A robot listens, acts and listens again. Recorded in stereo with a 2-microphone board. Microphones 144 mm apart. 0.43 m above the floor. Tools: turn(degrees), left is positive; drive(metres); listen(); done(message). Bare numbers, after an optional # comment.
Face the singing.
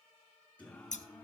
turn(30)
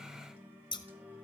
# So it is at 10° right.
turn(-10)
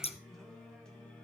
# The singing is now 10° left.
turn(10)
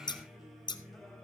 done("Found it: singing, straight ahead.")